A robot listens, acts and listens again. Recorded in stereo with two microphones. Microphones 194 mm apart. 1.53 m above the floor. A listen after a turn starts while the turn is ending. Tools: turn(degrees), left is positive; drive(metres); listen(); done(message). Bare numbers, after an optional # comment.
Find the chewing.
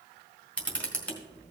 listen()
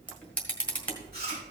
# The chewing: about 55° right or 125° right.
turn(-55)
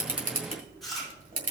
done("Found it: chewing, straight ahead, 2 to 4 m away.")